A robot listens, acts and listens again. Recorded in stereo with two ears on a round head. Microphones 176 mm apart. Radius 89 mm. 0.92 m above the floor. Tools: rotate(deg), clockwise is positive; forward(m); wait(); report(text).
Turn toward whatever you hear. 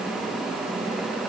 wait()
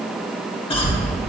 rotate(-25)
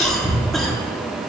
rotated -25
report("Facing the cough.")